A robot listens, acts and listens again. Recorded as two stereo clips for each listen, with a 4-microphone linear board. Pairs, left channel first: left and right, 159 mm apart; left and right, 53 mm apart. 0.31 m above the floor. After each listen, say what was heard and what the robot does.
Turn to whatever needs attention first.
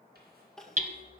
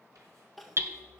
Turn 30° left.
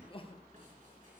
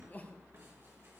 So it is at 145° left. Turn 145° left.
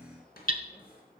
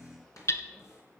Keep listening.
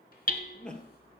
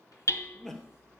Facing the crying, 1 to 2 m away.